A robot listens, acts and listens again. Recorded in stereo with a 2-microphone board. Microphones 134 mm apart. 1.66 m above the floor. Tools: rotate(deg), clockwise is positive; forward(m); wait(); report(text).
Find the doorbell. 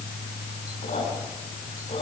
wait()
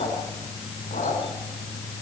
wait()
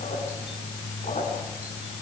report("I can't make out a doorbell, only a squeak.")